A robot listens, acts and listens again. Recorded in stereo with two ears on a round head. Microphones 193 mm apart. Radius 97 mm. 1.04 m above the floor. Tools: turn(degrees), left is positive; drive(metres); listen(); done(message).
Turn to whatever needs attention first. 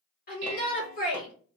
turn(degrees=45)
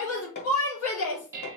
turn(degrees=90)
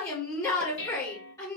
turn(degrees=15)
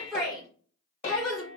done("Found it: a shout, straight ahead, 2 to 4 m away.")